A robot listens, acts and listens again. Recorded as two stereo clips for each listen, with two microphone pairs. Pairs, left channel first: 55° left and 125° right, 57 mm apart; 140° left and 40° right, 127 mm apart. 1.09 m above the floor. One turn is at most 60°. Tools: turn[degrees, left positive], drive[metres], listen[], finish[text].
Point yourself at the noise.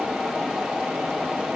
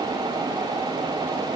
Action: listen[]
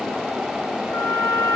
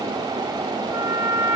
Thought: The trumpet: 30° left.
Action: turn[30]
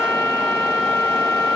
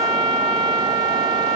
Thought: The trumpet is now 10° left.
Action: turn[10]
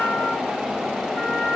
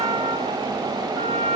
Action: finish[Found it: a trumpet, straight ahead, over 4 m away.]